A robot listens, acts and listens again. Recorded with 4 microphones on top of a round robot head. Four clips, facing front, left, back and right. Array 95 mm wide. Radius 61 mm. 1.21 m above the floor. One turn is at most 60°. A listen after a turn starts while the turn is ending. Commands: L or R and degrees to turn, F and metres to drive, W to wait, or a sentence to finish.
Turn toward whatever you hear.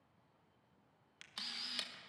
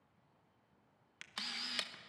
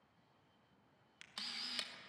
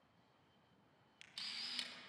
L60
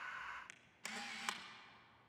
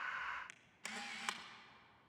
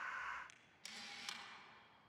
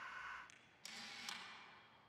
L50
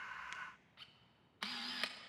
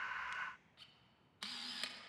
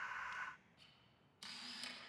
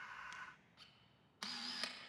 R20
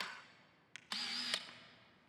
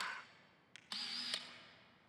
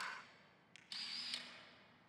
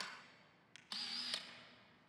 Facing the camera shutter, 1 to 2 m away.